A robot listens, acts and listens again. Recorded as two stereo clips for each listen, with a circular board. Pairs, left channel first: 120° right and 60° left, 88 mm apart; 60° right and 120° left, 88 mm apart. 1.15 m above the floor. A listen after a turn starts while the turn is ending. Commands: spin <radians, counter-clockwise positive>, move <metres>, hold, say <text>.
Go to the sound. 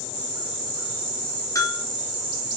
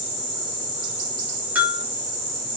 spin -2.97
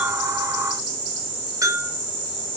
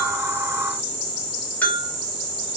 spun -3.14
spin 0.17
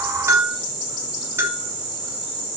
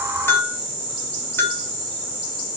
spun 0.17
move 1.0
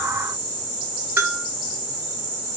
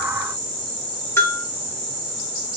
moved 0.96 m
move 1.0
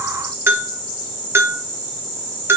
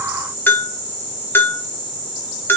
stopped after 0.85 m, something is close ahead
say I am next to the bell.